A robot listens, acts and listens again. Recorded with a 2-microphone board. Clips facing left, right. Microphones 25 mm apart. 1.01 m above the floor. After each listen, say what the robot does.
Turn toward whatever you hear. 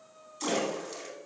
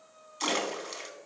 Turn 45° right.
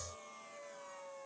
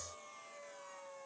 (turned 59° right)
Keep listening.
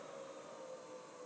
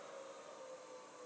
I heard a splash, but can't make it out now. It was about 15° left or 80° right.